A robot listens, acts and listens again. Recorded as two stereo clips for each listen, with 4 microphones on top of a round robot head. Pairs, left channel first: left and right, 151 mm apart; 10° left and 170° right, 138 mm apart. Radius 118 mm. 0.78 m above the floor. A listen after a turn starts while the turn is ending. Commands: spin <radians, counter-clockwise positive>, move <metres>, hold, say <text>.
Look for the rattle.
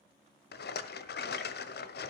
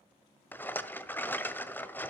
spin 1.48
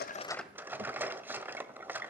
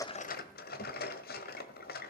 spin -0.17
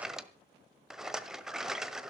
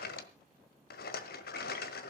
say Facing the rattle.